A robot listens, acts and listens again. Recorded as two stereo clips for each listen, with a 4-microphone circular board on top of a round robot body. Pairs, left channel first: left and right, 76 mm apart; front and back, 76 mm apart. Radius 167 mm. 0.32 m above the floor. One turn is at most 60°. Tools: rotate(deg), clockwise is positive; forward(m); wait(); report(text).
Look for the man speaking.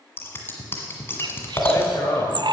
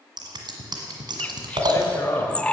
rotate(-50)
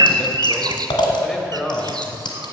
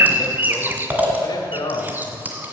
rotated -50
rotate(-10)
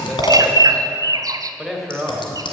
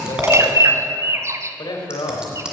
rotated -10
report("Found it: a man speaking, straight ahead, 2 to 4 m away.")